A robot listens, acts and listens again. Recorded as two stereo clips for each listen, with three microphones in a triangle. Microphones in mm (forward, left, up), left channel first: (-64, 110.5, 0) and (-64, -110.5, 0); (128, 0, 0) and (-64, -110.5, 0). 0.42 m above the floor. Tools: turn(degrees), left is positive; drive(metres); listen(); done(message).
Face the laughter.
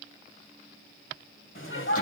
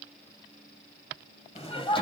turn(degrees=95)
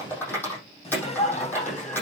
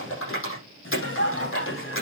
turn(degrees=40)
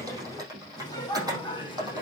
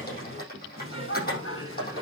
turn(degrees=25)
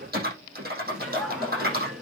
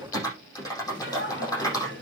done("Found it: laughter, straight ahead, over 4 m away.")